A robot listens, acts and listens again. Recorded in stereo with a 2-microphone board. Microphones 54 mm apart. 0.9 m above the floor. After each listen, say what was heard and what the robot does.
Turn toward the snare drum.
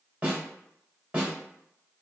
The snare drum: about 25° right or 155° right. Turn 25° right.
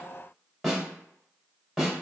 Found it: a snare drum, straight ahead.